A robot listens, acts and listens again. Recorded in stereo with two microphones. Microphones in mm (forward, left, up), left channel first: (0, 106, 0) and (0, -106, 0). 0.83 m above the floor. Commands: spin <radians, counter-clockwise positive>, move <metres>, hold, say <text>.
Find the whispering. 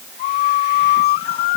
hold
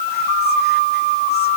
hold
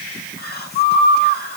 spin 0.87
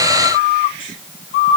hold
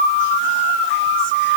hold
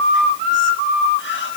say I heard whispering, but can't make it out now. It was about straight ahead or 80° left.